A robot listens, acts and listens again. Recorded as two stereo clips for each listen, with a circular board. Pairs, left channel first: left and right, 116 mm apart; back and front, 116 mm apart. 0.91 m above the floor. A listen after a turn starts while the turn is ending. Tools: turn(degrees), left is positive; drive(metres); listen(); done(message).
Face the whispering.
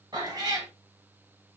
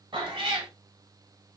listen()
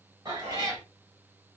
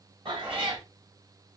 turn(degrees=-75)
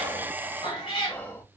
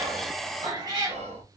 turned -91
turn(degrees=15)
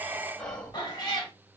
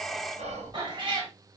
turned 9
done("Found it: whispering, straight ahead.")